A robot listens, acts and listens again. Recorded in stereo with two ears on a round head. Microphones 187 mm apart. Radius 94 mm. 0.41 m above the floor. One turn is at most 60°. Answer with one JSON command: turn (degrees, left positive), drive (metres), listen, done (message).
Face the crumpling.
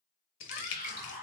{"turn": 60}
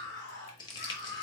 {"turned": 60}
{"turn": 25}
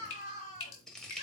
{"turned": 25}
{"done": "Found it: crumpling, straight ahead."}